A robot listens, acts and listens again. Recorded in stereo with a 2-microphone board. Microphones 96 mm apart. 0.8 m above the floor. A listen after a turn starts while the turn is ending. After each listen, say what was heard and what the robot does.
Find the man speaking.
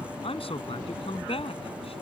The man speaking: about 75° left or 105° left. Turn 75° left.
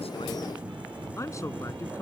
Keep listening.
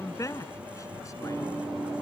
So it is at 35° left. Turn 35° left.
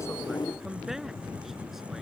Keep listening.
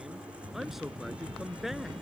Facing the man speaking.